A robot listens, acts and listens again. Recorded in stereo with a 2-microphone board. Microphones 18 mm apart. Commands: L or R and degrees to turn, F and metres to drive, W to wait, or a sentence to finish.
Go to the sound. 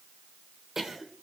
R25
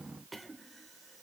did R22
F1.0
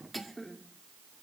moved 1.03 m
F1.0
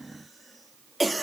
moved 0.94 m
F1.0
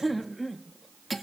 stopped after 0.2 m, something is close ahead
Arrived at the cough, straight ahead.